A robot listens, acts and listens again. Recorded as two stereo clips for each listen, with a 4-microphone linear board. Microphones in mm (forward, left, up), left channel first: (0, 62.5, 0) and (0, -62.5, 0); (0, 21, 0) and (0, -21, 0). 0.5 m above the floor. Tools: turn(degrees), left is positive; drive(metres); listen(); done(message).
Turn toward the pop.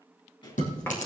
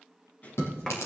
turn(degrees=40)
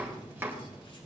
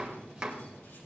listen()
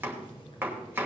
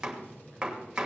done("I heard a pop, but can't make it out now. It was about straight ahead or 100° left.")